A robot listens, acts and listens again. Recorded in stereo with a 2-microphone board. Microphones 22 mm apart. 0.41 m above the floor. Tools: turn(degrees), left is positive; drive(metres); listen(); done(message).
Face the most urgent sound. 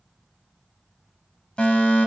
turn(degrees=45)
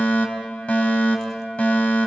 turn(degrees=80)
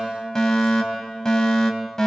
turn(degrees=30)
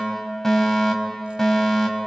turn(degrees=20)
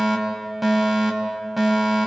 done("Found it: a fire alarm, straight ahead.")